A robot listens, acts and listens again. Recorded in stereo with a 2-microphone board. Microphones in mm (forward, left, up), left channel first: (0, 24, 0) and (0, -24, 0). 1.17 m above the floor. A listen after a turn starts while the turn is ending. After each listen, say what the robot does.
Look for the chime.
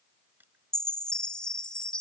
Turn 20° left.
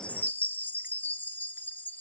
Turn 140° left.
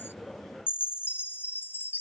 Turn 45° left.
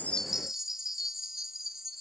Turn 10° right.
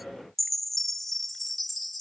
Facing the chime.